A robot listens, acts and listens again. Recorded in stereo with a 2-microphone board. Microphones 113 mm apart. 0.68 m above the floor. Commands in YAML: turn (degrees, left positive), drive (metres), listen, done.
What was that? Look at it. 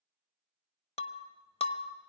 turn: 65
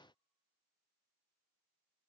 listen: true
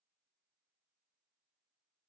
done: "I heard breaking glass, but can't make it out now. It was about straight ahead or 50° left."